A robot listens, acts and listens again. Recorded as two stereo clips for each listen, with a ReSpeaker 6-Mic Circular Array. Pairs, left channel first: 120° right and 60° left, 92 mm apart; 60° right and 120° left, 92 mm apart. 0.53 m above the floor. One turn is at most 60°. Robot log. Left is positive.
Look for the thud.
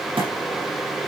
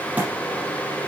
note: The thud: 50° left.
cmd yaw +50
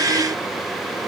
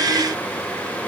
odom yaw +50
end: Facing where the thud came from. I can't hear it now.